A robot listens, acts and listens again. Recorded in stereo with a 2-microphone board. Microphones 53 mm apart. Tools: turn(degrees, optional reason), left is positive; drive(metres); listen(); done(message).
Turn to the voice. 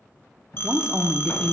turn(degrees=-20, reason="The woman speaking: about 20° right or 160° right.")
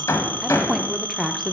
done("Facing the woman speaking.")